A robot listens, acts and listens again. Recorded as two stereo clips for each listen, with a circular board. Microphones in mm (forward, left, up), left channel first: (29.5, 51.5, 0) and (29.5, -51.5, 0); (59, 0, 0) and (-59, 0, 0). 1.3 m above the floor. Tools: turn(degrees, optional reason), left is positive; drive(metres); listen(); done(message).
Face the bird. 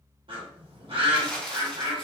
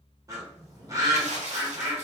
turn(degrees=-120, reason="The bird: 120° right.")
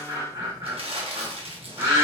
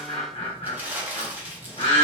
turn(degrees=-35, reason="The bird is now 35° right.")
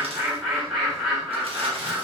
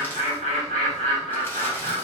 done("Facing the bird, 1 to 2 m away.")